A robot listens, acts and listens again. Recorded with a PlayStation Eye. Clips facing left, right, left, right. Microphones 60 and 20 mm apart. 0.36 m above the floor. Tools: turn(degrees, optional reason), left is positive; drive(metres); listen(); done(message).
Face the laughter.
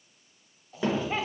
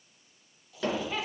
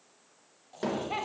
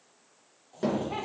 turn(degrees=30, reason="The laughter: about 30° left or 150° left.")
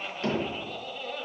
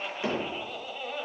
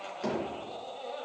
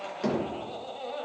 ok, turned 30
turn(degrees=-15, reason="So it is at 15° right.")
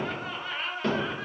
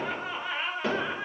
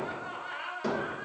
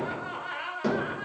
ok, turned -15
turn(degrees=-15, reason="The laughter is now 15° right.")
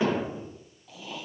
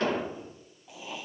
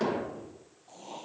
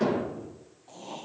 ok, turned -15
turn(degrees=-15, reason="The laughter is now 15° right.")
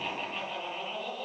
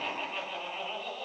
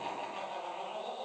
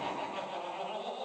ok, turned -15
done("Facing the laughter.")